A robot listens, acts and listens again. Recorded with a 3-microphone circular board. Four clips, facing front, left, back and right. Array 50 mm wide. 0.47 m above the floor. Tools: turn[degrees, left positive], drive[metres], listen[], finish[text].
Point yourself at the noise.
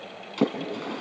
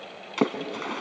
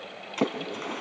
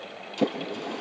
Thought: The splash: 105° left.
Action: turn[105]
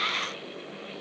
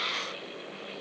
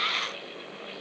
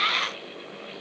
Action: finish[I heard a splash from this way, but can't make it out now.]